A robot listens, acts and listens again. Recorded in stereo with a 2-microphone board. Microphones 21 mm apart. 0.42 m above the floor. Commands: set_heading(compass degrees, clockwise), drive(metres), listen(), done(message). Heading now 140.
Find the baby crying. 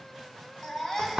set_heading(115)
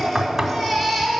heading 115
done("Facing the baby crying.")